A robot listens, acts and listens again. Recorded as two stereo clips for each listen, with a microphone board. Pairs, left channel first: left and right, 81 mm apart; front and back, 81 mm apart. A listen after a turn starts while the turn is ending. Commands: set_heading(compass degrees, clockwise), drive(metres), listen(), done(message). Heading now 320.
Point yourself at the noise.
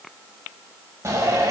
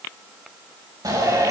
set_heading(105)
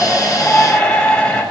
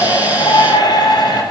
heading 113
set_heading(103)
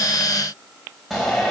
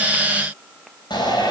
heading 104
done("Found it: a shout, straight ahead, over 4 m away.")